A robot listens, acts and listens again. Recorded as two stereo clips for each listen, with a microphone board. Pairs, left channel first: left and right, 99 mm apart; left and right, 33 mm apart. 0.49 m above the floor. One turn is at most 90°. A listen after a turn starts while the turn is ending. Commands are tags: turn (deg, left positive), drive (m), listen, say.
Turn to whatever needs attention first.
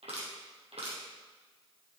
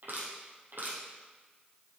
<listen/>
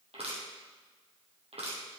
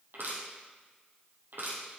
<listen/>
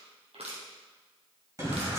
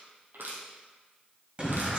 <turn deg="-35"/>
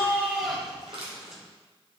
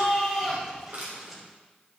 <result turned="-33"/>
<say>Facing the shout, 2 to 4 m away.</say>